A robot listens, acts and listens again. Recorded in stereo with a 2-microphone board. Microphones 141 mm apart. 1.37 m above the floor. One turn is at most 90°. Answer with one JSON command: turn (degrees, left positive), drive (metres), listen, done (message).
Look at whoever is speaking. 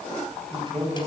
{"turn": -35}
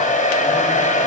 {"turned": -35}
{"listen": true}
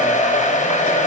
{"listen": true}
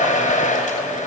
{"done": "I heard a man speaking, but can't make it out now. It was about straight ahead or 110° right."}